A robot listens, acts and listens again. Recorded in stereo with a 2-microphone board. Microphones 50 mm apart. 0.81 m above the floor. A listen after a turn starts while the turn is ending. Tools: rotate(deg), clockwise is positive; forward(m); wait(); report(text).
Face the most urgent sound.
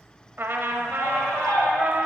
rotate(-55)
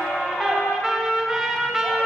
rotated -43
rotate(-20)
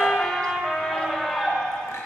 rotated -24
report("Facing the scream, 2 to 4 m away.")